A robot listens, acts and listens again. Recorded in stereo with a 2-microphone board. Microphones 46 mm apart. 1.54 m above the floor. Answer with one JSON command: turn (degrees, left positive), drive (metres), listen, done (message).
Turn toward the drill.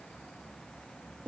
{"listen": true}
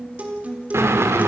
{"turn": -75}
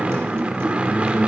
{"turn": -30}
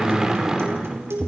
{"turn": -15}
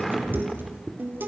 {"done": "Facing the drill."}